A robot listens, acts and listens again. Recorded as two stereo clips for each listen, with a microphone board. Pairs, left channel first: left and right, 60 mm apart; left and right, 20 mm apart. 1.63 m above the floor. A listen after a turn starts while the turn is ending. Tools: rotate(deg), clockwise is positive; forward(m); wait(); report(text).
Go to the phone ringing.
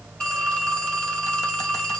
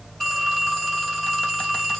rotate(-30)
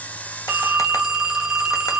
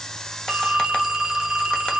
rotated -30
rotate(15)
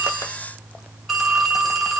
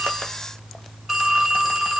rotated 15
forward(1.0)
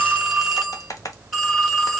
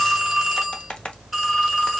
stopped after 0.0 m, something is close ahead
report("Something is in my way. I am facing the phone ringing but have not reached it.")